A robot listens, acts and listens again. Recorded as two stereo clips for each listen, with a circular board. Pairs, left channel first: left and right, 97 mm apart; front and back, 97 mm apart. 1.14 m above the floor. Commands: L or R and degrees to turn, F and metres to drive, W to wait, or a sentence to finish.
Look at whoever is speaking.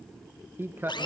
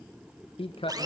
R20
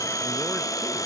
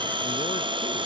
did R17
W
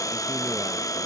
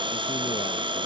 W
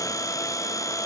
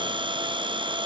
Facing where the man speaking came from. I can't hear it now.